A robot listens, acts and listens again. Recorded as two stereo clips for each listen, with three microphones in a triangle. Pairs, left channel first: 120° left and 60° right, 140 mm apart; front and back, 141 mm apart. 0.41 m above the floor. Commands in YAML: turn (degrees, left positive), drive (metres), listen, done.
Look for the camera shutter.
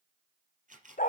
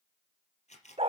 turn: -35
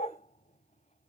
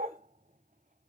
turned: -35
listen: true
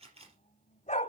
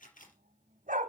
turn: -15
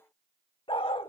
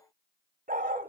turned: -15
listen: true
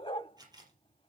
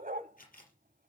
done: "Facing the camera shutter, 2 to 4 m away."